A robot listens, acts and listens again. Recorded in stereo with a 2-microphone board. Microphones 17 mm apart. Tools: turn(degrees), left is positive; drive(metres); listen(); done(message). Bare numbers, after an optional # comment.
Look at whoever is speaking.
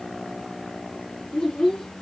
# The child speaking: about 55° left or 125° left.
turn(55)
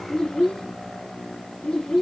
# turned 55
# So it is at 60° left.
turn(60)
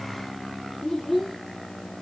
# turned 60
done("Facing the child speaking, 2 to 4 m away.")